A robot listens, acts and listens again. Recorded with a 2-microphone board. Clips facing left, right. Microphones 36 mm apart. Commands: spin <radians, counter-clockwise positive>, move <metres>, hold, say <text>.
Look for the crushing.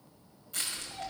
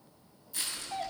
spin 1.05
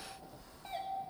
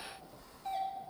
say Found it: crushing, straight ahead.